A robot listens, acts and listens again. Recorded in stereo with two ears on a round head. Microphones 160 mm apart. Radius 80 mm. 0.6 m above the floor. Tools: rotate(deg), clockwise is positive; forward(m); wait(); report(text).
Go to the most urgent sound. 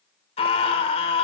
rotate(-35)
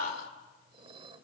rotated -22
rotate(-120)
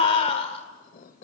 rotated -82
rotate(-40)
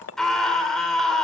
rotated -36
forward(1.0)
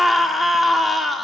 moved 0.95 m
forward(1.0)
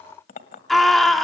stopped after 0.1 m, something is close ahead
report("Arrived at the scream, straight ahead.")